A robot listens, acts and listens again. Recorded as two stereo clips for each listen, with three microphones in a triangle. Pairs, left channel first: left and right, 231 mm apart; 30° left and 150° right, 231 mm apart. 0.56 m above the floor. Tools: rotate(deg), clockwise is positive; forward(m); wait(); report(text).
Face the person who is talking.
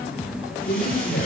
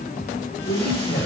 rotate(-60)
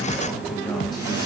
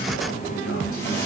wait()
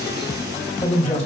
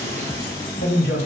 rotate(-30)
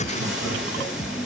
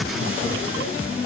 wait()
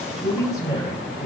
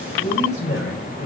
rotate(-20)
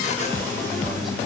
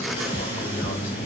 wait()
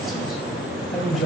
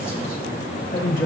report("Found it: a man speaking, straight ahead.")